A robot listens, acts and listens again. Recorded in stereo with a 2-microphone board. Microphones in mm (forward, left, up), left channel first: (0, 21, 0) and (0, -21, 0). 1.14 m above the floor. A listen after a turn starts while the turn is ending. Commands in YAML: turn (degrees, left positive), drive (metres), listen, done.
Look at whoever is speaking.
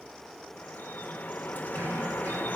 listen: true
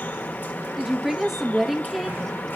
turn: -30
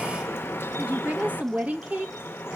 turn: -145
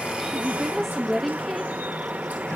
done: "Found it: a woman speaking, straight ahead."